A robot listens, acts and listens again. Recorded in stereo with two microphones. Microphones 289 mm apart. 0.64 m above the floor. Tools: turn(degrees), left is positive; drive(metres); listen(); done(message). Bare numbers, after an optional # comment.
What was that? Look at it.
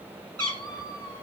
# The cat meowing: about 60° right or 120° right.
turn(-60)
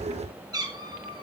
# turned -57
# So it is at 15° right.
turn(-15)
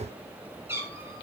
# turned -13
# The cat meowing is now 10° right.
turn(-10)
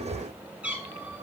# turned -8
done("Facing the cat meowing, 2 to 4 m away.")